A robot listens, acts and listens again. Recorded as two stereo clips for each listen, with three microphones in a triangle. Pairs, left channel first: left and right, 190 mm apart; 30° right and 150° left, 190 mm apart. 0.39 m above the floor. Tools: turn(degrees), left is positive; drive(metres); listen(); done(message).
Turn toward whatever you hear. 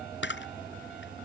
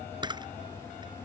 turn(degrees=85)
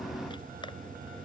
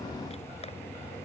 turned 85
listen()
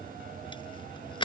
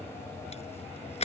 turn(degrees=25)
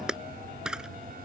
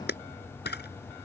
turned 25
done("Found it: a camera shutter, straight ahead.")